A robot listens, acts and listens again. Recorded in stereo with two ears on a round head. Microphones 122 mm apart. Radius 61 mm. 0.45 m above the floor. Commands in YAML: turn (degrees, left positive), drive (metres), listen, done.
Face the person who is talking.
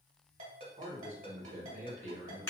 turn: -50
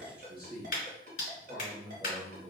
turn: -10
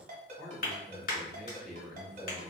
done: "Found it: a man speaking, straight ahead, 1 to 2 m away."